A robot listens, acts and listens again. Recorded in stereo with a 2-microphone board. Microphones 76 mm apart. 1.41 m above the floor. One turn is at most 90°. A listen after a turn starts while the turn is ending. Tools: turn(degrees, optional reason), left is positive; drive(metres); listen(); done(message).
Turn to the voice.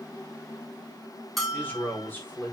turn(degrees=25, reason="The man speaking: about 25° left or 155° left.")
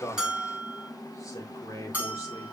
turn(degrees=90, reason="So it is at 130° left.")
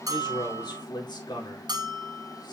turn(degrees=75, reason="The man speaking is now 75° left.")
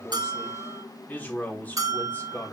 turn(degrees=25, reason="The man speaking is now 25° left.")
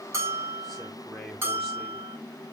done("Facing the man speaking.")